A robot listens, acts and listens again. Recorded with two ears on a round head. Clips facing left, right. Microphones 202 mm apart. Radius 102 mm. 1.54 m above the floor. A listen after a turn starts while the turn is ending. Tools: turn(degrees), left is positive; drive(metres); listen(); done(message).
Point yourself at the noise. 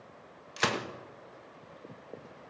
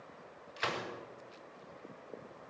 turn(degrees=65)
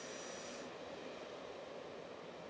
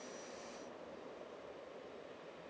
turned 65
listen()
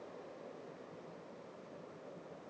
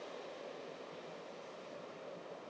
done("I heard a gunshot, but can't make it out now. It was about straight ahead or 50° left.")